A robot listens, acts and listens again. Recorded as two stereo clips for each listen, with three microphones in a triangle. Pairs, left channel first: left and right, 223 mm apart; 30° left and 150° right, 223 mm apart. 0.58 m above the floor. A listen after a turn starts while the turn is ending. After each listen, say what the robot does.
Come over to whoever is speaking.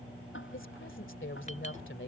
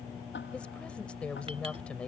Turn 115° left.
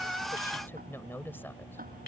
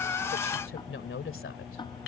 Turn 10° left.
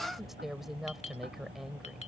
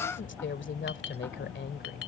Drive 1.0 m forward.
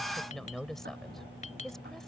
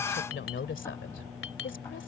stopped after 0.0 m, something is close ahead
Something is in my way. I am facing the woman speaking but have not reached it.